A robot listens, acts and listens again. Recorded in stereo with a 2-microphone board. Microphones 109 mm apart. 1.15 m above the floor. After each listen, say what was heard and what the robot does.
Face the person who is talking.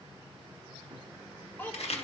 The child speaking: about 15° left or 165° left. Turn 15° left.
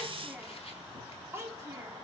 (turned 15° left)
So it is at 25° right. Turn 25° right.
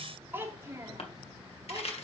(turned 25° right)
The child speaking is now 35° right. Turn 35° right.
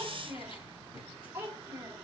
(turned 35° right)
The child speaking is now 20° right. Turn 20° right.
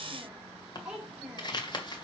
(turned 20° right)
Found it: a child speaking, straight ahead, 2 to 4 m away.